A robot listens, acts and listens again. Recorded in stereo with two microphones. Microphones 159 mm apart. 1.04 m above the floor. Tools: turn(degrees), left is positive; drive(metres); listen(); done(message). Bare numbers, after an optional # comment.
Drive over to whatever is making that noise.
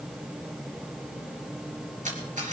# The camera shutter: about 50° right or 130° right.
turn(-50)
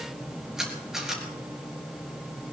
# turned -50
drive(1.0)
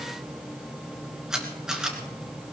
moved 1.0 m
drive(1.0)
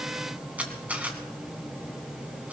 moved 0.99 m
# The camera shutter is now 10° right.
turn(-10)
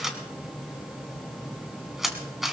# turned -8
drive(1.0)
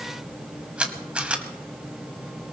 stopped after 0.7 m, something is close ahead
# The camera shutter is now 10° right.
turn(-10)
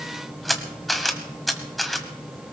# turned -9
done("Arrived at the camera shutter, straight ahead.")